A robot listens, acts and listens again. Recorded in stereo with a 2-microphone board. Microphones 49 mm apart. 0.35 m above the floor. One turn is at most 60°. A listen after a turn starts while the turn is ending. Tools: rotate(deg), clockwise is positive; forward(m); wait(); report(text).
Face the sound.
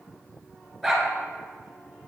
rotate(30)
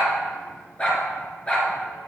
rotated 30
rotate(-25)
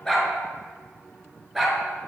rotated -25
report("Found it: a dog barking, straight ahead, 1 to 2 m away.")